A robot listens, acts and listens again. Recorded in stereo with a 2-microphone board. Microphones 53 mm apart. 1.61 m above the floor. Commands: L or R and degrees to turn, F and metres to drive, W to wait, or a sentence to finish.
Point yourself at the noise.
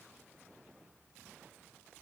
W
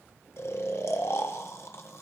L60
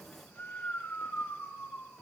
L45
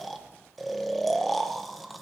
Facing the snoring, 1 to 2 m away.